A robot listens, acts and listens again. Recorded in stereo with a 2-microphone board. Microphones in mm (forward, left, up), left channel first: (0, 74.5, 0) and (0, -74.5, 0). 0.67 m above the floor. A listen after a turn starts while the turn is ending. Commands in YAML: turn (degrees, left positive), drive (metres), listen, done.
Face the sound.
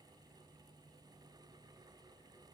listen: true
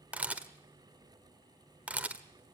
turn: -30
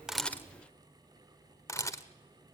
turn: 20
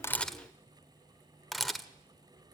done: "Facing the camera shutter, 1 to 2 m away."